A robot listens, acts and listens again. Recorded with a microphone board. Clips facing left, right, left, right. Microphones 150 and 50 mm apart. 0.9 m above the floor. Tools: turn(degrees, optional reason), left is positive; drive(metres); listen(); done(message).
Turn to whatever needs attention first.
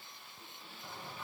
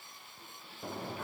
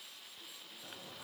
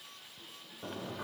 listen()
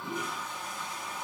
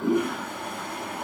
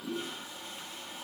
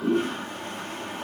listen()
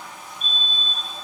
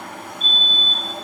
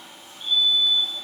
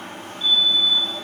turn(degrees=90)
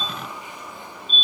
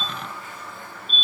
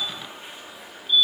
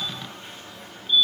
done("Found it: a fire alarm, straight ahead, over 4 m away.")